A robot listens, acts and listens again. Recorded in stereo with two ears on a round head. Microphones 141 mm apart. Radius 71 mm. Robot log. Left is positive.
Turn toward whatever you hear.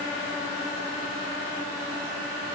cmd idle
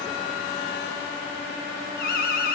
note: The alarm: about 65° left or 115° left.
cmd yaw +65
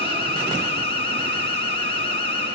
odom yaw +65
note: So it is at 40° left.
cmd yaw +40
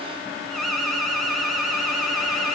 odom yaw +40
end: Facing the alarm.